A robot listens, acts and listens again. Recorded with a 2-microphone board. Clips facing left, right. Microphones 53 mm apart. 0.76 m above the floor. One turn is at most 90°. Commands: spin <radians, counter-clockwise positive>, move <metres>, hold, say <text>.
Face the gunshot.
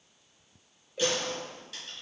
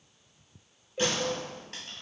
spin -0.87
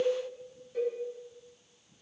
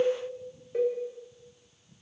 hold
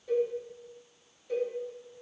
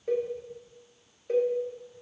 say I heard a gunshot, but can't make it out now. It was about straight ahead or 80° right.